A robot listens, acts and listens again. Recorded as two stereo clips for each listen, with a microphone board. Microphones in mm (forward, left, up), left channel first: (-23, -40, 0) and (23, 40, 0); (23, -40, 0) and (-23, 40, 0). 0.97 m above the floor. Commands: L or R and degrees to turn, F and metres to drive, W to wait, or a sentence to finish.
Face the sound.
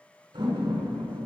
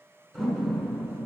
L35
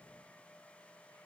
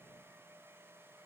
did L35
Facing where the door slam came from. I can't hear it now.